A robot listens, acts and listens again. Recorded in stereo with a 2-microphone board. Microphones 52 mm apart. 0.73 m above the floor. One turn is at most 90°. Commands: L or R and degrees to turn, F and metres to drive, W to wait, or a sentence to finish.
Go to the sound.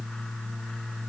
W
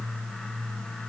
W
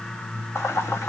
L55
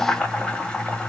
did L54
L15
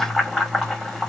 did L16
F1.0
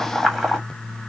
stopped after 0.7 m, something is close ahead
Arrived at the boiling, straight ahead.